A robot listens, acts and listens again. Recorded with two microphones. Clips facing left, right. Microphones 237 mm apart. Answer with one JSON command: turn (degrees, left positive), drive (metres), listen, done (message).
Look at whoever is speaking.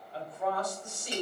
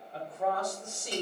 {"turn": -50}
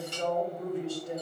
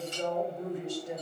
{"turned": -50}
{"turn": -20}
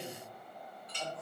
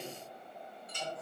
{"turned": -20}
{"done": "Found it: a woman speaking, straight ahead, 1 to 2 m away."}